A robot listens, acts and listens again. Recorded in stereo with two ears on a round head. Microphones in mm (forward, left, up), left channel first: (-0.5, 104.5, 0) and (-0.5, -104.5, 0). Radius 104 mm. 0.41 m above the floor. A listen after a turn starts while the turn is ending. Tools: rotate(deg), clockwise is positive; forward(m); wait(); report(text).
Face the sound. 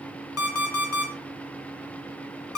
rotate(-70)
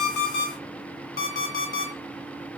rotate(-40)
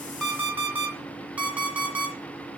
rotate(10)
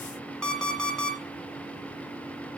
report("Facing the alarm clock, 2 to 4 m away.")